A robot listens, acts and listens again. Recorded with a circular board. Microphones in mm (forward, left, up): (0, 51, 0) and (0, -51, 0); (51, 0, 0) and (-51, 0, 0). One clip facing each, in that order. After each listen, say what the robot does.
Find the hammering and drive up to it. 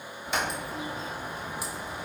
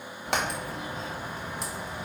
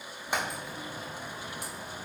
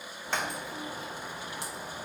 Turn 75° right.
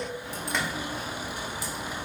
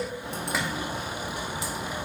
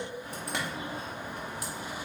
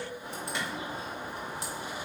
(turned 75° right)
Keep listening.
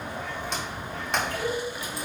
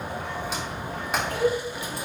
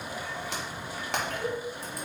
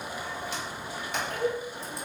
Drive 1.0 m forward.
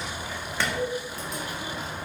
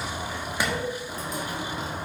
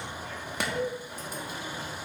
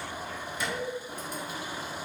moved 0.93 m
Turn 15° right.
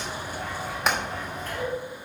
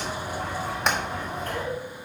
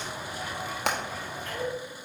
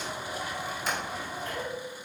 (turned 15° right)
Drive 1.0 m forward.
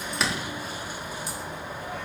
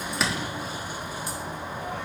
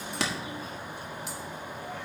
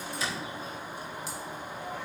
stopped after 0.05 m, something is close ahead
Arrived at the hammering, straight ahead.